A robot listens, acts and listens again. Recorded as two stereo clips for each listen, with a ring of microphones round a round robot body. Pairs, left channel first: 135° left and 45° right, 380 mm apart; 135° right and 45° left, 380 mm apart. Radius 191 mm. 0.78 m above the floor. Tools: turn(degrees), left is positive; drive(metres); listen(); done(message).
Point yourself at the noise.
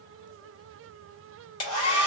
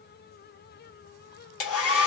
turn(degrees=175)
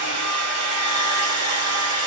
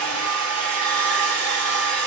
done("Facing the hair dryer.")